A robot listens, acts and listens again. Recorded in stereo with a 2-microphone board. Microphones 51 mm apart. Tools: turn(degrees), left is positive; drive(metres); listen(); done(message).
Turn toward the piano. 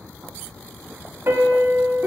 turn(degrees=-65)
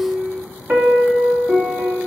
turn(degrees=-30)
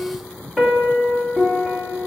done("Facing the piano, 2 to 4 m away.")